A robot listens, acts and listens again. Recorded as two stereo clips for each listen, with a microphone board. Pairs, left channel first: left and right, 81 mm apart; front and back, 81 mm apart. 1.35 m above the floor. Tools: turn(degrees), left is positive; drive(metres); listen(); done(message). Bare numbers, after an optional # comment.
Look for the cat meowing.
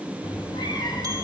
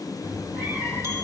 # The cat meowing: 110° left.
turn(110)
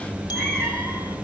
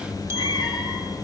# The cat meowing is now 15° left.
turn(15)
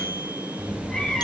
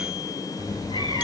# The cat meowing is now 10° left.
turn(10)
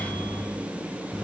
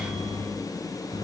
done("Found it: a cat meowing, straight ahead, 2 to 4 m away.")